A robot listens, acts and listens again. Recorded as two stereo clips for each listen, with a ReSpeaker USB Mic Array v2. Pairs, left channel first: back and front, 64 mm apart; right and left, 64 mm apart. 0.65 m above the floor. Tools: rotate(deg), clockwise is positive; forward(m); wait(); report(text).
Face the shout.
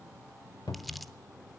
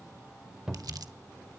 wait()
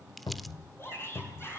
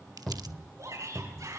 rotate(-130)
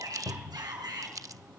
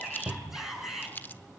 report("Facing the shout, over 4 m away.")